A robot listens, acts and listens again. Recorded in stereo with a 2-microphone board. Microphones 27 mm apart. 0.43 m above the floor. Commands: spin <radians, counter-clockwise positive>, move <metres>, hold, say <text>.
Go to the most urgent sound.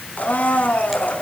hold
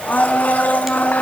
hold
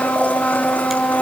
say I can't make out anything urgent to turn to.